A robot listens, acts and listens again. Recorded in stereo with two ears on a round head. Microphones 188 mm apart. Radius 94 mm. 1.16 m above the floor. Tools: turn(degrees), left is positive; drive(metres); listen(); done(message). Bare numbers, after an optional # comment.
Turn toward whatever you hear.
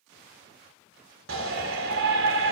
# The shout: about 65° right or 115° right.
turn(-65)
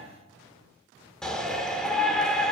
done("Found it: a shout, straight ahead, over 4 m away.")